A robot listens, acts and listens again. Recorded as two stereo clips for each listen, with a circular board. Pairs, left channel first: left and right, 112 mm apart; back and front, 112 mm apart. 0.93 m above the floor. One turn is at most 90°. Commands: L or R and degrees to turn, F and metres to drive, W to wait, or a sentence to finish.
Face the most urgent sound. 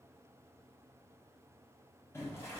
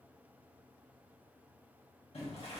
W
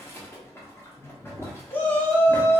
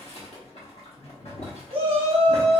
L20
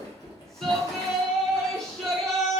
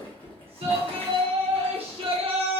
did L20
Facing the shout.